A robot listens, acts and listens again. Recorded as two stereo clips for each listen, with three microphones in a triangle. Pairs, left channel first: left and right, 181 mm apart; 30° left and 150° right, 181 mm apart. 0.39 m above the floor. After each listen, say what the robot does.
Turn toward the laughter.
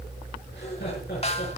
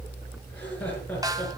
Turn 110° left.
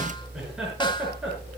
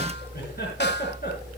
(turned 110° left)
Facing the laughter, over 4 m away.